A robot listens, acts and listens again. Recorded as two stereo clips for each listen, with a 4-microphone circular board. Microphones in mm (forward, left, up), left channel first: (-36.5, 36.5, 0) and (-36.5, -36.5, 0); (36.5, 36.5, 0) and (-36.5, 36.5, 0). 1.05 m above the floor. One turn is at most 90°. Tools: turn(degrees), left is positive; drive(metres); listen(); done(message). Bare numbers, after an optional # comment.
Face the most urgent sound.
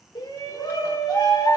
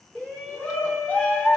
# The shout: 70° left.
turn(70)
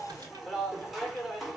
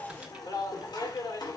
done("Found it: a shout, straight ahead.")